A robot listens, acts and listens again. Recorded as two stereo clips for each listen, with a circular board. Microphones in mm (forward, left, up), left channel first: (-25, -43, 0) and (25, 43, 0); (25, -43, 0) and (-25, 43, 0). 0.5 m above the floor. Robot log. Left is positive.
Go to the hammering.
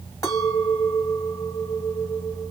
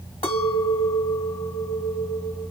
cmd idle
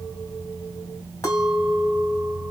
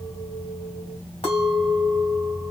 cmd idle
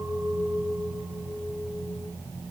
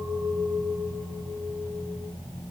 end: I can't make out hammering to turn to.